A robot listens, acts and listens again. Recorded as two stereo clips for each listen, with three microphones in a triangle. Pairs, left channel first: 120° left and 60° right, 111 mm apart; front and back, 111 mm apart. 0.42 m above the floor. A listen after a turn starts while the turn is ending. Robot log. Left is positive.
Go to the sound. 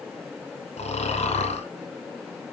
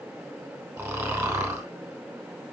note: The snoring: 115° left.
cmd yaw +115
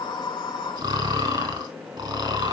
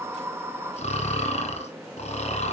cmd fwd 1.0
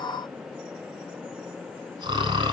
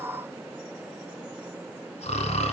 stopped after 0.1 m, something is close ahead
note: The snoring is now 10° right.
cmd yaw -10
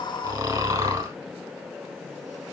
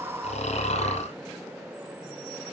end: Something is in my way. I am facing the snoring but have not reached it.